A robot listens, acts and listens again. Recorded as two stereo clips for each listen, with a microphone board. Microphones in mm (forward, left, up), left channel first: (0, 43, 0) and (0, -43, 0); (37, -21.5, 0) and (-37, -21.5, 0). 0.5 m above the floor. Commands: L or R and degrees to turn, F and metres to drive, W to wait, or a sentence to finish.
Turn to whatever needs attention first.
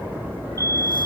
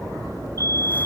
L140
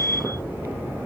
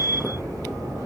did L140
L30
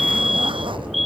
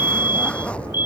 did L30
Facing the fire alarm.